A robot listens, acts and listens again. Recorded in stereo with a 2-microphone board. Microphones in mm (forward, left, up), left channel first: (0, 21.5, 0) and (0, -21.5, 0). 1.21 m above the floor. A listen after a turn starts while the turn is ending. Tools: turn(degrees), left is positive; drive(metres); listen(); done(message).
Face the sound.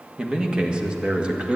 turn(degrees=-25)
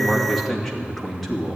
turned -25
done("Found it: a man speaking, straight ahead, 2 to 4 m away.")